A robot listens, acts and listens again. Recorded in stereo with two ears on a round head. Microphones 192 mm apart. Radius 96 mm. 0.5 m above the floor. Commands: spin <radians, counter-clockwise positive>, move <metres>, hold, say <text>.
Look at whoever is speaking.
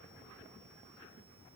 hold
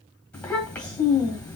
spin 0.52
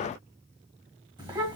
spin -0.35
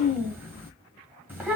spin -0.17
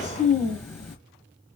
say Found it: a child speaking, straight ahead.